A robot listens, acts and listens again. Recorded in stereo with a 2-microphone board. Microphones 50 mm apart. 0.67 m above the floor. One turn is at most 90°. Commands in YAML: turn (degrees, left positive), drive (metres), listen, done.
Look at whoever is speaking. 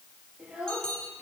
turn: -15
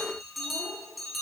listen: true
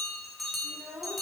turn: -90
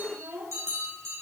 turn: -45
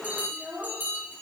done: "Found it: a child speaking, straight ahead, over 4 m away."